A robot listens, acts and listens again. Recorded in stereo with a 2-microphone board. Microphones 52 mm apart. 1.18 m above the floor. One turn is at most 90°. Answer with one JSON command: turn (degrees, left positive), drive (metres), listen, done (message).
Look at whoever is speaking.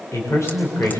{"turn": 65}
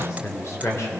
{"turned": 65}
{"turn": 55}
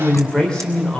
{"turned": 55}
{"turn": 10}
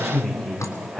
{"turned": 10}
{"done": "Found it: a man speaking, straight ahead."}